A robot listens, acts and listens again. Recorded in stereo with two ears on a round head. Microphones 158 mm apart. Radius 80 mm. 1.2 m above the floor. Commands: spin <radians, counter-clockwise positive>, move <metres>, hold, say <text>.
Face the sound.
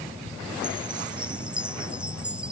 spin -0.52
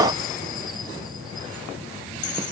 hold
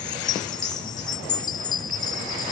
spin 0.44
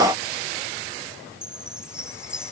say Facing the chime.